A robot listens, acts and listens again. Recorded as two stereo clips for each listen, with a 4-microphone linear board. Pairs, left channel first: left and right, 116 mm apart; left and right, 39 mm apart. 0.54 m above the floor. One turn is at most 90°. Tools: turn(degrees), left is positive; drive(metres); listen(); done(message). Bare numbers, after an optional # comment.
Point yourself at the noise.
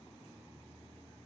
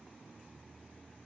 listen()
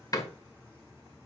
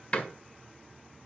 # The door slam: about 30° left or 150° left.
turn(30)
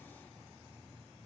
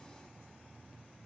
listen()
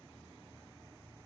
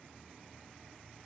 done("I heard a door slam, but can't make it out now. It was about straight ahead or 120° left.")